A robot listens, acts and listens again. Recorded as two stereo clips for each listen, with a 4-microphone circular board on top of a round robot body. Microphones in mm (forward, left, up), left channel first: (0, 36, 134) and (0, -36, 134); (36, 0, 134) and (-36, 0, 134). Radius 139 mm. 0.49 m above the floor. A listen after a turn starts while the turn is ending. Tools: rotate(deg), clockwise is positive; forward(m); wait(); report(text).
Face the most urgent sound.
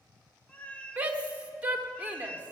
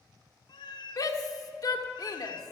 rotate(20)
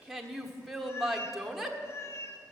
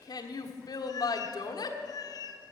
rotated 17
report("Facing the shout.")